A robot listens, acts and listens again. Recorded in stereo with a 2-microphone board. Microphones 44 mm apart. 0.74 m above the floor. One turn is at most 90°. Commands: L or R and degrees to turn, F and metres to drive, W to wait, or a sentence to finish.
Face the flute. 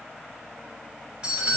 W
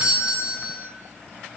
W
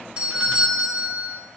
I can't make out a flute, only a doorbell.